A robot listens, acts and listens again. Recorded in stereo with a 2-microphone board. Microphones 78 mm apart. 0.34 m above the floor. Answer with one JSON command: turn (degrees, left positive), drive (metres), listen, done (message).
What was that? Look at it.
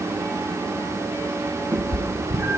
{"turn": -30}
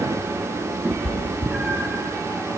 {"done": "Found it: a cat meowing, straight ahead."}